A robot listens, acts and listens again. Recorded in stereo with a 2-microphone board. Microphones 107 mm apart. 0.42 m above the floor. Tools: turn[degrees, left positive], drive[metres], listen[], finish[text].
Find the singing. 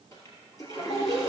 Thought: The singing: about 60° left or 120° left.
Action: turn[60]
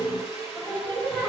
Thought: So it is at 25° left.
Action: turn[25]
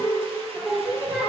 Action: finish[Facing the singing.]